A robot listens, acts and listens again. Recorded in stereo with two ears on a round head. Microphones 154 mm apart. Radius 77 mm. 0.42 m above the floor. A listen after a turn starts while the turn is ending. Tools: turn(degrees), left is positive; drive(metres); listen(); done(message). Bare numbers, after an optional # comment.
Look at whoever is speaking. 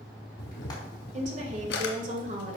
# The woman speaking: about 45° right or 135° right.
turn(-45)
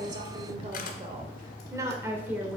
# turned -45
# So it is at 10° right.
turn(-10)
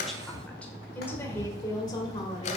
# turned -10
# The woman speaking is now 25° left.
turn(25)
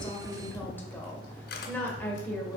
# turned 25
# The woman speaking is now 10° left.
turn(10)
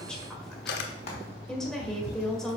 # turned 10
done("Found it: a woman speaking, straight ahead.")